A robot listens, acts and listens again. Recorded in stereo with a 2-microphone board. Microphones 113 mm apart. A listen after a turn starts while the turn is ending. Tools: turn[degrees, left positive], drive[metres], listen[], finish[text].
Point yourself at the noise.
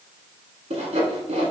Action: turn[-90]
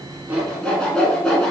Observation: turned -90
Action: finish[Found it: sawing, straight ahead, 1 to 2 m away.]